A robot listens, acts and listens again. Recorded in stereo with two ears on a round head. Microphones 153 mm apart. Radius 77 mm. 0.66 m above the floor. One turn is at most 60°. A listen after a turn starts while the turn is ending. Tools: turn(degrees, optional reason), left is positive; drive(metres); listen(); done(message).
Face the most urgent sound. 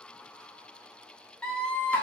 turn(degrees=30)
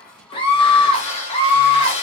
turn(degrees=60, reason="So it is at 145° left.")
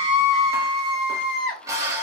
turn(degrees=60, reason="The scream is now 80° left.")
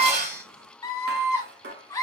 turn(degrees=20, reason="The scream is now 20° left.")
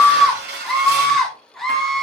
done("Facing the scream.")